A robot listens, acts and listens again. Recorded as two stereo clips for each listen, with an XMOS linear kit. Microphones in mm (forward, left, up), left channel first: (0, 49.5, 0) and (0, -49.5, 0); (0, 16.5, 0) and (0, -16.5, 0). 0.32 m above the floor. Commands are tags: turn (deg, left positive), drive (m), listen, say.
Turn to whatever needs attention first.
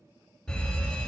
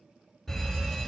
<turn deg="30"/>
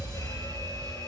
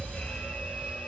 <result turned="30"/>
<turn deg="140"/>
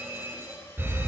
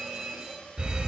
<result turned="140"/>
<turn deg="-25"/>
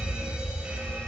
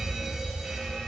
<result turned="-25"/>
<turn deg="-10"/>
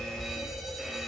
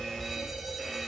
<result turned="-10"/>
<say>Found it: a fire alarm, straight ahead.</say>